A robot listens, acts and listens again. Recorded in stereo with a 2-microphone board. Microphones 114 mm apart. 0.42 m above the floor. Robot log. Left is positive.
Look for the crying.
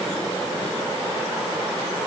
cmd idle
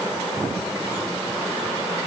cmd idle
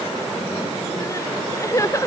note: The crying: about 25° left or 155° left.
cmd yaw +25
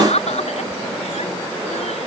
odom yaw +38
note: So it is at 115° left.
cmd yaw +115
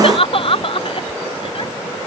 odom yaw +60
note: The crying is now 55° left.
cmd yaw +55
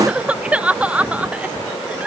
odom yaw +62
note: The crying is now 10° right.
cmd yaw -10
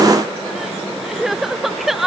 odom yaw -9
end: Facing the crying.